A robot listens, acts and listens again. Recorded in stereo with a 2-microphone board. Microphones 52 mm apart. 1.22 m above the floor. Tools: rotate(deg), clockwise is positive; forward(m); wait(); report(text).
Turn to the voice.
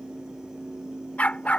wait()
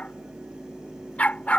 wait()
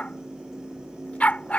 report("I can't make out anyone speaking, only a dog barking.")